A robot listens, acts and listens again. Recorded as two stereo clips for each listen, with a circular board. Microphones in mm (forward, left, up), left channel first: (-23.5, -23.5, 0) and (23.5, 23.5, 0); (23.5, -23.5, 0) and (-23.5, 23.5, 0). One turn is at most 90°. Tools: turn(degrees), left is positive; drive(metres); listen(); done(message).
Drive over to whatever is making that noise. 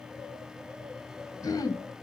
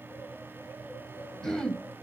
turn(degrees=-90)
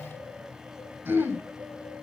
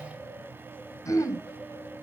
drive(metres=1.0)
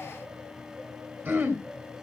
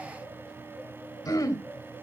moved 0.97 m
turn(degrees=-10)
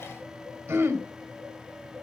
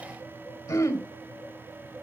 drive(metres=1.0)
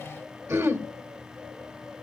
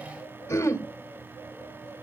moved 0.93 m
drive(metres=1.0)
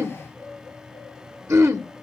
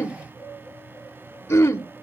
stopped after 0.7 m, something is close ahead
done("I am next to the throat clearing.")